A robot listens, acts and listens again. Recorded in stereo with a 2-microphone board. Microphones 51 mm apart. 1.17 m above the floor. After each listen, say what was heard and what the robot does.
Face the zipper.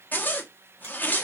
The zipper: about 35° left or 145° left. Turn 35° left.
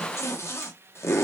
So it is at 105° left. Turn 105° left.
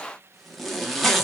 Found it: a zipper, straight ahead, under 1 m away.